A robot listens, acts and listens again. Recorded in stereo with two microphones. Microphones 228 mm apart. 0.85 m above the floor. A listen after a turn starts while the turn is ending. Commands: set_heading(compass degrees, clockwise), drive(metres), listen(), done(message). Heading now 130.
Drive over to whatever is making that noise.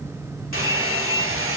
set_heading(195)
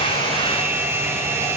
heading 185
set_heading(195)
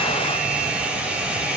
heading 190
drive(1.0)
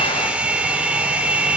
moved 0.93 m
drive(1.0)
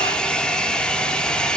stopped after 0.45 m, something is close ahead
done("I am next to the hair dryer.")